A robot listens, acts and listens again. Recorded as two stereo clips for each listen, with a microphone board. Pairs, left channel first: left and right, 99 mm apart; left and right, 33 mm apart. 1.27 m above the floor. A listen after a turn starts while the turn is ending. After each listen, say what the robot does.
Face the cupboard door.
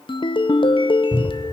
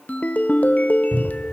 Turn 35° left.
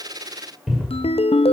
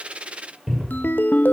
Found it: a cupboard door, straight ahead, over 4 m away.